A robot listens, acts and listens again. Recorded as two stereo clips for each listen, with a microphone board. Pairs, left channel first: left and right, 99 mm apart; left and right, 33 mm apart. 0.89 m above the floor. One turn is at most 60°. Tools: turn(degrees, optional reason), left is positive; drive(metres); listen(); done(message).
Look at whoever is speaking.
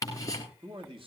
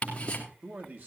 turn(degrees=-60, reason="The man speaking: about 60° right or 120° right.")
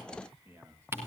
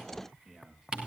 turn(degrees=-25, reason="So it is at 25° right.")
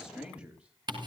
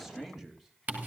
turn(degrees=-10, reason="The man speaking is now 10° right.")
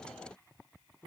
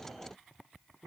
turn(degrees=-10, reason="The man speaking is now 10° right.")
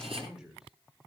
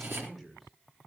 done("Facing the man speaking, 2 to 4 m away.")